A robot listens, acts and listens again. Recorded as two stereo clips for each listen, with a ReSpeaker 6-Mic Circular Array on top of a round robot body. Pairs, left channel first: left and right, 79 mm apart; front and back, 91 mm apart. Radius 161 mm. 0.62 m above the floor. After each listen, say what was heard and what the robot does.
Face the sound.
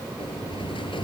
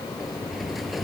The sliding door: 90° left. Turn 90° left.
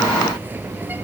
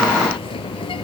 The sliding door is now 25° right. Turn 25° right.
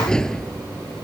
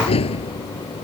The sliding door is now 10° left. Turn 10° left.
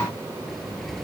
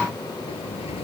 Found it: a sliding door, straight ahead.